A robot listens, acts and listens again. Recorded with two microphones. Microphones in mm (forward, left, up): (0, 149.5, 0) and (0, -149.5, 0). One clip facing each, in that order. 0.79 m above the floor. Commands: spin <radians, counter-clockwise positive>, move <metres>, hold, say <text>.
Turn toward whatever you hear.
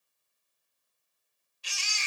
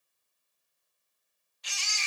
spin 0.61
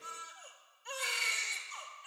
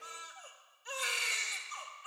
say Found it: a baby crying, straight ahead.